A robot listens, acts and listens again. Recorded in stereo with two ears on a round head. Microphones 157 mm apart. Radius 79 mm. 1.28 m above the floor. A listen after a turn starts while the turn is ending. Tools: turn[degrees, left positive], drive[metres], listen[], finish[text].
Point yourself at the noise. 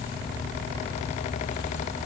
Action: listen[]
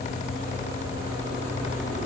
Action: listen[]
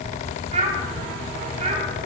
Thought: The child speaking: about 40° right or 140° right.
Action: turn[-40]
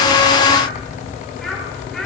Action: finish[Facing the child speaking.]